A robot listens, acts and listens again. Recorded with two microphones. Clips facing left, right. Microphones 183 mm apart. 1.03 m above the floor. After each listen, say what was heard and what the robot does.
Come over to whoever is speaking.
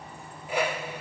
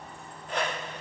Keep listening.
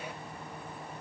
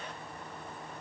Keep listening.
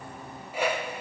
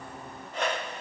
I can't make out anyone speaking to turn to.